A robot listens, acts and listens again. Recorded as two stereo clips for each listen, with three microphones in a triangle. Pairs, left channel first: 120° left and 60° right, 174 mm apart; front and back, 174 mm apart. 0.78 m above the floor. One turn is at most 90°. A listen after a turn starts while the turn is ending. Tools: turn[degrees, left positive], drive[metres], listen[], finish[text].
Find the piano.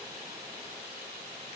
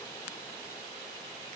Action: listen[]
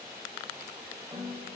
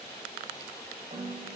Thought: The piano: 125° right.
Action: turn[-90]
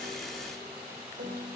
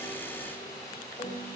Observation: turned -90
Thought: The piano is now 55° right.
Action: turn[-55]
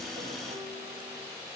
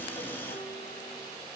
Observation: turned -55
Action: listen[]
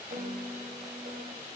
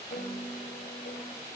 Thought: The piano is now 20° right.
Action: turn[-20]
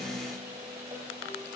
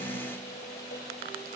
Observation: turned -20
Action: finish[Facing the piano, 2 to 4 m away.]